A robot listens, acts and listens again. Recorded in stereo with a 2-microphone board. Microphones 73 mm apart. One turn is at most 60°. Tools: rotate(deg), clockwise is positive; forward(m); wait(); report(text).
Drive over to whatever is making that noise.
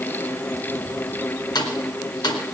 rotate(-60)
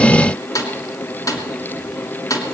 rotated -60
rotate(-55)
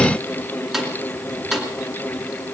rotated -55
forward(1.0)
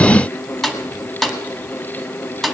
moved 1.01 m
forward(1.0)
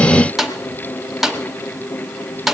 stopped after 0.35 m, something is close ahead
report("Arrived at the snare drum, straight ahead.")